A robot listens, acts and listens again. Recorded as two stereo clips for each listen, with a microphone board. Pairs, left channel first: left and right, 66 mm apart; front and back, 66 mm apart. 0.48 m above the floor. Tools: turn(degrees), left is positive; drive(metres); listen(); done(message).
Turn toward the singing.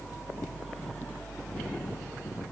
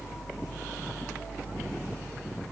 listen()
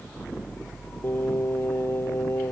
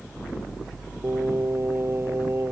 turn(degrees=140)
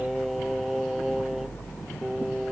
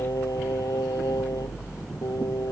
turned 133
turn(degrees=-10)
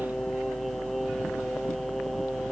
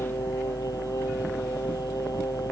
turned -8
listen()
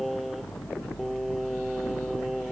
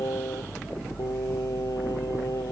done("Found it: singing, straight ahead.")